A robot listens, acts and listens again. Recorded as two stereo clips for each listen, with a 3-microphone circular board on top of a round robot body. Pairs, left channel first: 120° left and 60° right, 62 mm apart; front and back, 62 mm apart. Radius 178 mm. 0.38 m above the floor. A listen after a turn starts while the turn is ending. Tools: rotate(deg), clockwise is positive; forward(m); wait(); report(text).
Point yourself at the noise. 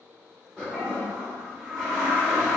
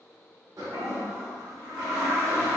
rotate(165)
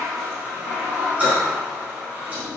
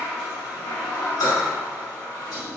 rotate(-10)
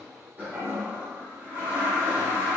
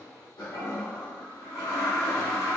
report("Facing the toilet flushing.")